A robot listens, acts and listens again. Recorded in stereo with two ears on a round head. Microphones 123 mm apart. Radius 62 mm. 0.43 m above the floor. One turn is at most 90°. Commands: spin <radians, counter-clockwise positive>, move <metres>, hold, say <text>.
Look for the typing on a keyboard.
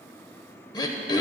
hold
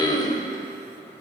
hold
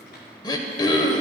say I can't make out typing on a keyboard to turn to.